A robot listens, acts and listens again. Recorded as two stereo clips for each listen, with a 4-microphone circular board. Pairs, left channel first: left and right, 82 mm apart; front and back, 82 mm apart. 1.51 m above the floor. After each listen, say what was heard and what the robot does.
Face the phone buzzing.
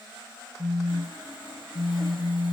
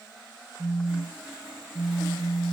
The phone buzzing: 130° left. Turn 130° left.
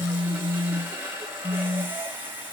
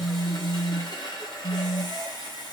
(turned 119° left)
The phone buzzing is now 10° left. Turn 10° left.
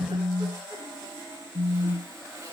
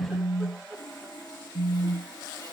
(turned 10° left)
Facing the phone buzzing.